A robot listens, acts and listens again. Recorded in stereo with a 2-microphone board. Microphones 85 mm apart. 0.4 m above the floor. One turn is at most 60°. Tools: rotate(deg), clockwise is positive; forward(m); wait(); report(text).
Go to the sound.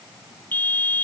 rotate(-20)
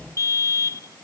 rotate(-60)
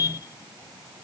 rotate(-55)
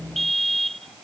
forward(1.0)
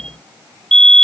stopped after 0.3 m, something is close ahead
rotate(-10)
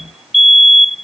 report("Blocked. The fire alarm is further on, straight ahead.")